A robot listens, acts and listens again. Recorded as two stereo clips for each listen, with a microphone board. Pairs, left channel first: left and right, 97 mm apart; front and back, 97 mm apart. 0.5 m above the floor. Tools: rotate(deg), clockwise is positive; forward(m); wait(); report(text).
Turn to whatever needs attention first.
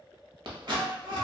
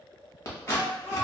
rotate(115)
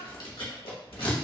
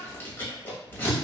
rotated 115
wait()
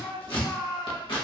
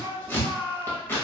report("Found it: a shout, straight ahead.")